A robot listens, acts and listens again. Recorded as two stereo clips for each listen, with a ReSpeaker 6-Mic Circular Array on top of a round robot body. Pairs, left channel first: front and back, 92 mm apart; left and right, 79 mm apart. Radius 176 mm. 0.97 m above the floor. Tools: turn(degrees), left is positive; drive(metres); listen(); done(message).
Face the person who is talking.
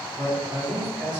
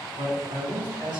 turn(degrees=-100)
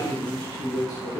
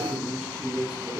done("Found it: a man speaking, straight ahead, 2 to 4 m away.")